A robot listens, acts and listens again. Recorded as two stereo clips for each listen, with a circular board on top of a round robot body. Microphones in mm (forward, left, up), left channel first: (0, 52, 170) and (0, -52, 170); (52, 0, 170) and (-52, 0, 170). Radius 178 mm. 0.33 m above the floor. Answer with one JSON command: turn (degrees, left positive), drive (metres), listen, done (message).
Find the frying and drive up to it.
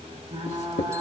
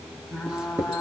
{"turn": -90}
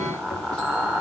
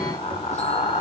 {"turn": -15}
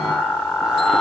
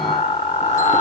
{"drive": 1.0}
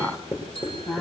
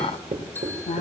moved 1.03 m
{"drive": 1.0}
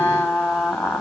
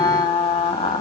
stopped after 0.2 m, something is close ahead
{"done": "I am next to the frying."}